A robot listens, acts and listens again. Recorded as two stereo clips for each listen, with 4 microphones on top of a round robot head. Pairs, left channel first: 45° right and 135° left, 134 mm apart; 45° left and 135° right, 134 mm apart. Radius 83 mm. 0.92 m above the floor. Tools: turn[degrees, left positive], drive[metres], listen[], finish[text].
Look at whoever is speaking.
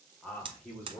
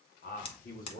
Thought: The man speaking: 35° left.
Action: turn[35]
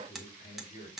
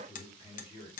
Action: finish[Facing the man speaking, 2 to 4 m away.]